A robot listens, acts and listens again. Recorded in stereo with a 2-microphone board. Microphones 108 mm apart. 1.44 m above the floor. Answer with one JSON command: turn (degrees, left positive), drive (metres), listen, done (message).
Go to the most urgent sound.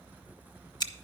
{"listen": true}
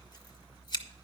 {"listen": true}
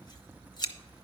{"done": "I can't make out anything urgent, only scissors."}